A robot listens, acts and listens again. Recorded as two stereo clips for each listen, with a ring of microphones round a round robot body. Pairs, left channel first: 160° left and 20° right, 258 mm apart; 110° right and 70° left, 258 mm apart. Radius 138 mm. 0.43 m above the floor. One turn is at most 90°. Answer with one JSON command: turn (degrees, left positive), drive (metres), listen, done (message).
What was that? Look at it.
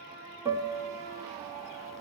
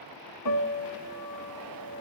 {"turn": -90}
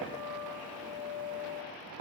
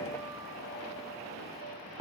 {"turn": -10}
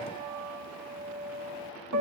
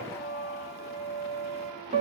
{"done": "Facing the piano."}